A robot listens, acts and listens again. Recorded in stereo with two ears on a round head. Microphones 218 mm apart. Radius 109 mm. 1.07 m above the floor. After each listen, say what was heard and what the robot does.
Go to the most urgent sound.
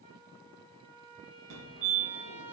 The fire alarm: about 55° right or 125° right. Turn 55° right.
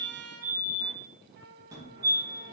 So it is at 15° right. Turn 15° right.
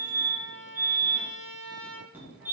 The fire alarm is now 10° right. Turn 10° right.
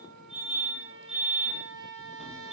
Drive 1.0 m forward.
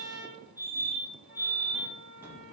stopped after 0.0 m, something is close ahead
The fire alarm is now 10° right. Turn 10° right.
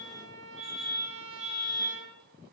Blocked. The fire alarm is further on, straight ahead.